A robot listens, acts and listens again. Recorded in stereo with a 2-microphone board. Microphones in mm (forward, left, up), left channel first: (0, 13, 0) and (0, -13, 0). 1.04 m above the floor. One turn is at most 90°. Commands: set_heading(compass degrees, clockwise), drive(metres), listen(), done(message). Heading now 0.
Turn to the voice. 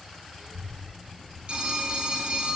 set_heading(20)
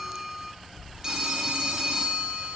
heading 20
set_heading(110)
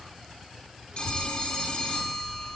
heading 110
set_heading(165)
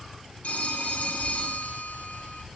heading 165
done("Facing the child speaking, 2 to 4 m away.")